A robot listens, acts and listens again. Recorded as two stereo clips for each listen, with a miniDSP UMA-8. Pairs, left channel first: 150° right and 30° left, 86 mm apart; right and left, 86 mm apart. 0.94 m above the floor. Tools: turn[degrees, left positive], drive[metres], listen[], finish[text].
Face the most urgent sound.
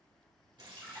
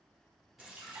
Action: listen[]
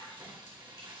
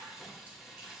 Action: listen[]
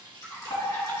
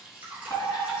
Thought: The fire alarm: 135° right.
Action: turn[-135]
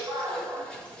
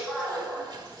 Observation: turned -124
Thought: The fire alarm is now 10° right.
Action: turn[-10]
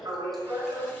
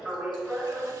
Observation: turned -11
Action: finish[Facing the fire alarm, 2 to 4 m away.]